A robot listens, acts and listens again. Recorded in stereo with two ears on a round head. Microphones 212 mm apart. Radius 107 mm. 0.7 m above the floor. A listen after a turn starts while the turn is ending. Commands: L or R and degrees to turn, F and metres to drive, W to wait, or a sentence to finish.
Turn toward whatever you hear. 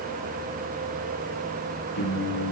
L90
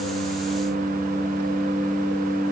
Found it: singing, straight ahead, over 4 m away.